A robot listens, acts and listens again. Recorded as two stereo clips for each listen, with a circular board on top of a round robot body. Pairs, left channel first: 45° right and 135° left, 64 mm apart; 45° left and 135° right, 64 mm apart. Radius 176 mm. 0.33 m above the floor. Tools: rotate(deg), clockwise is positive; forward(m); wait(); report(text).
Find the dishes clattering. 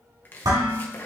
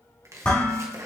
rotate(-115)
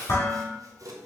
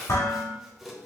report("Facing the dishes clattering.")